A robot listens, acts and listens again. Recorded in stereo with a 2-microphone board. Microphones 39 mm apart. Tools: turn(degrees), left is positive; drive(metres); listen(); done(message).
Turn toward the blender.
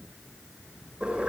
listen()
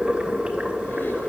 listen()
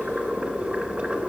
done("I can't make out a blender, only boiling.")